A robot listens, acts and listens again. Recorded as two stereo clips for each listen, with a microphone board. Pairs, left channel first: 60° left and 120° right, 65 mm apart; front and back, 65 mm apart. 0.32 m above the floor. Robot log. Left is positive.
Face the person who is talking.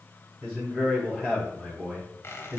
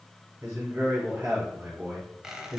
note: The man speaking: 165° left.
cmd yaw +165
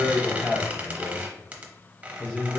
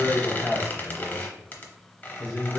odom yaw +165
note: The man speaking is now 10° left.
cmd yaw +10
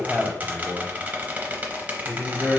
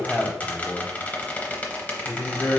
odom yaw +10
end: Facing the man speaking.